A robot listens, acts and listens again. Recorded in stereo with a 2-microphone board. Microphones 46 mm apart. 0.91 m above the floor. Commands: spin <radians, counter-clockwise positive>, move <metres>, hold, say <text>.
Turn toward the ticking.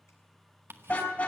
spin -1.05
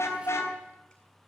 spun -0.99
hold
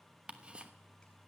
spin -0.52
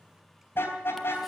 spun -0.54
hold
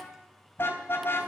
hold
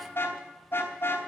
say Facing where the ticking came from. I can't hear it now.